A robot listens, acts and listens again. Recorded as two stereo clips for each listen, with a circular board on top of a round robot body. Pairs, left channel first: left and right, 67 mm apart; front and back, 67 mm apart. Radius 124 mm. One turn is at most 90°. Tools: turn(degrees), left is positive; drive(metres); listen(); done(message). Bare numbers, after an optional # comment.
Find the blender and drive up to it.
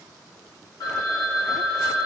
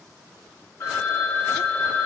listen()
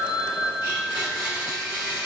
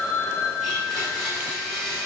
# The blender: 95° left.
turn(90)
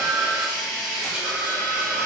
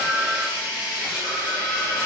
# The blender is now 15° right.
turn(-15)
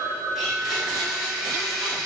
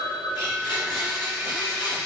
drive(1.0)
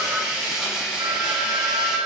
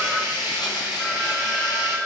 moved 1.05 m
drive(1.0)
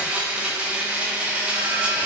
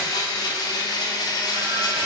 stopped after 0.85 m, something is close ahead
# The blender is now 15° right.
turn(-15)
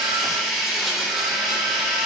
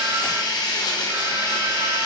done("I am next to the blender.")